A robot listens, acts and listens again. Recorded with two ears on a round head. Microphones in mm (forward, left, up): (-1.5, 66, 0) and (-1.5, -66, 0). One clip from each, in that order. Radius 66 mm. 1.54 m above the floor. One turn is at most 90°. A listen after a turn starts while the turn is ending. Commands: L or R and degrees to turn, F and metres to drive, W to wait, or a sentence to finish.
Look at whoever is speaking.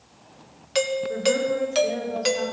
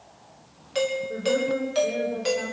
L90
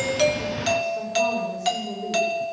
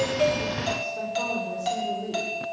R10
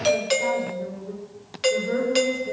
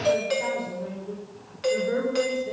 Facing the woman speaking.